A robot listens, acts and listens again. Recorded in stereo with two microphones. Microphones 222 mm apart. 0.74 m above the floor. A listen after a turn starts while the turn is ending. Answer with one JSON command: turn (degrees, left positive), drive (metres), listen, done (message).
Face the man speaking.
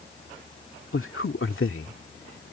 {"turn": 70}
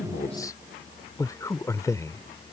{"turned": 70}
{"turn": 15}
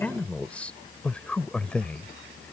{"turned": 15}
{"done": "Facing the man speaking."}